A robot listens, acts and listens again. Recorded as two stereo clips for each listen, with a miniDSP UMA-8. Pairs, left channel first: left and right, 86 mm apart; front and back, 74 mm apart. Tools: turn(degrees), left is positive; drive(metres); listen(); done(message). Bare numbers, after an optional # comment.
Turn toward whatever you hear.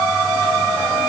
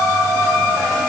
listen()
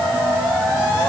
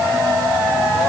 listen()
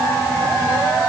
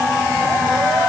done("I can't make out anything.")